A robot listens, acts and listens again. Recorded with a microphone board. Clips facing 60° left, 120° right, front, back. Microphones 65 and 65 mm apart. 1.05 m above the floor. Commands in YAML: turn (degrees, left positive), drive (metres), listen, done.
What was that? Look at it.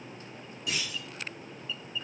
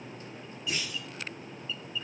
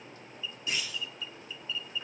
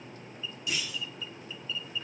turn: 55
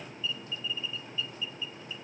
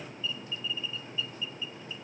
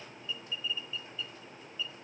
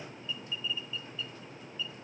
done: "Facing where the clunk came from. I can't hear it now."